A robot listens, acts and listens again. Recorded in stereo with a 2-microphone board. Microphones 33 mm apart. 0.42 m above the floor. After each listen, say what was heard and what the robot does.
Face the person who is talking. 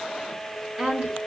The woman speaking: about 45° right or 135° right. Turn 45° right.
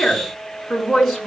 Found it: a woman speaking, straight ahead, over 4 m away.